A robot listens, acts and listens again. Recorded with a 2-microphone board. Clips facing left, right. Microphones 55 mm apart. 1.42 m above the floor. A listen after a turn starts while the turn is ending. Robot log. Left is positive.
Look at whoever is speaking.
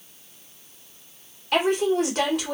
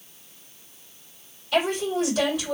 note: The woman speaking: about 60° left or 120° left.
cmd yaw +60
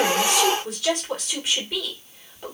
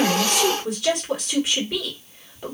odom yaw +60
end: Found it: a woman speaking, straight ahead.